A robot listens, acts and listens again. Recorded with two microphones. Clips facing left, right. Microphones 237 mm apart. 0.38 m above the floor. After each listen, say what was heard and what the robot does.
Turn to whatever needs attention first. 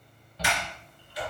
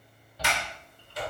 Turn 30° right.
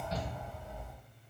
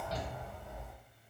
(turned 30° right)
So it is at 140° right. Turn 140° right.
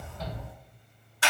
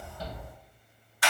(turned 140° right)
The shout is now 10° right. Turn 10° right.
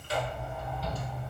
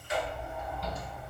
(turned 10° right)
Facing the shout, 1 to 2 m away.